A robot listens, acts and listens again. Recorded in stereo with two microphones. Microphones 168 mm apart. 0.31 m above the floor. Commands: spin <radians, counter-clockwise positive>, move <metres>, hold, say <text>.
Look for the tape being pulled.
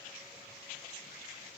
hold
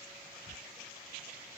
hold
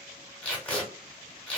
spin 0.52
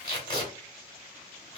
spin 2.44
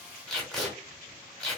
say Facing the tape being pulled, 1 to 2 m away.